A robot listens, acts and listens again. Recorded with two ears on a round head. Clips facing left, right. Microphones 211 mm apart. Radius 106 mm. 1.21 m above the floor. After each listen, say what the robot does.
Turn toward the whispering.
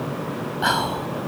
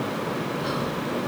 Turn 70° left.
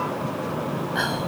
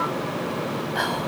Facing the whispering.